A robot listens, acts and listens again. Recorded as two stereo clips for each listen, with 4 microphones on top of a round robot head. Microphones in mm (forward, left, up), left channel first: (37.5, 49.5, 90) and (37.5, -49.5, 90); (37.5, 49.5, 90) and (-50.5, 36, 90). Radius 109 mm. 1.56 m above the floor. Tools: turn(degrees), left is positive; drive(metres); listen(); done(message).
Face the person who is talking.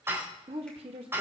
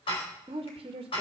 turn(degrees=-130)
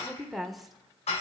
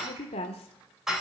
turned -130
done("Found it: a woman speaking, straight ahead.")